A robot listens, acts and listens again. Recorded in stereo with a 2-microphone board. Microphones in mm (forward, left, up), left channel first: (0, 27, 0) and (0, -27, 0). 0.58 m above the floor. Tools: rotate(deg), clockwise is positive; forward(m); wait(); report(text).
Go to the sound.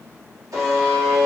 rotate(90)
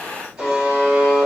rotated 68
rotate(10)
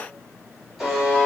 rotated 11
forward(1.0)
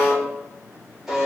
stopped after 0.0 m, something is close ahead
report("Something is in my way. I am facing the buzzer but have not reached it.")